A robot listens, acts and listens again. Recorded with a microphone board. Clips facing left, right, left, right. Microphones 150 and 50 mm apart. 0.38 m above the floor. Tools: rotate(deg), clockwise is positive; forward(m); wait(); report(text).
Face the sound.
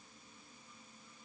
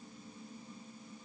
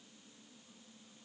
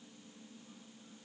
wait()
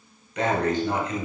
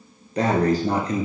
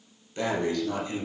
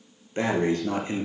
rotate(35)
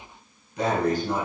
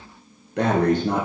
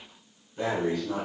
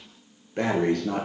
rotate(110)
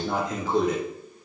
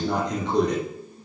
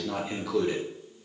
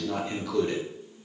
report("Facing the breathing.")